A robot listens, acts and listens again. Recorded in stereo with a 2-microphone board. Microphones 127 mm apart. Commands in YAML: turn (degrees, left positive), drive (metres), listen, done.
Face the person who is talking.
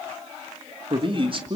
turn: -40
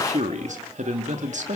turn: -95
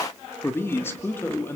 turn: 20
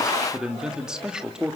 done: "Facing the man speaking."